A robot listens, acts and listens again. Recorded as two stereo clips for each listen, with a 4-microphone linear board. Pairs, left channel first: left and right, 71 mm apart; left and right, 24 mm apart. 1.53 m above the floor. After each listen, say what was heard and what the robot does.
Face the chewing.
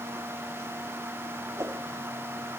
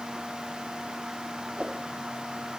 Keep listening.
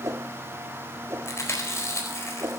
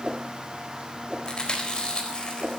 The chewing: about 40° left or 140° left. Turn 40° left.
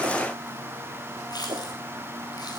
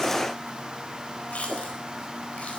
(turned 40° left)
So it is at 100° left. Turn 100° left.
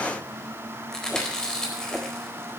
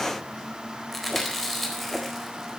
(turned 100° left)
The chewing is now 10° left. Turn 10° left.
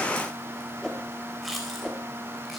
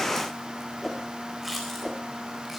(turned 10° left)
Facing the chewing, 2 to 4 m away.